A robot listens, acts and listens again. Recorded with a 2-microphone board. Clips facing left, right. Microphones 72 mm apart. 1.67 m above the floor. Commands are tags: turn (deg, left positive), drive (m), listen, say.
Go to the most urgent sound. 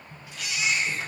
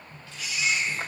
<turn deg="90"/>
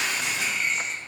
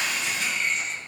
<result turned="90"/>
<drive m="1.0"/>
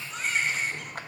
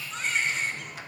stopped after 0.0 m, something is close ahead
<say>Blocked. The baby crying is further on, straight ahead.</say>